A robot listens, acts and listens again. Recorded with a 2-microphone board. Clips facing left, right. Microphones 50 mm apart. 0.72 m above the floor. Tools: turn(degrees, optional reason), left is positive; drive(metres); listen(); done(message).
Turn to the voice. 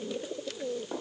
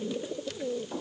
listen()
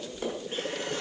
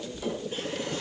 listen()
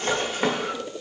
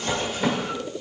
done("I can't make out anyone speaking to turn to.")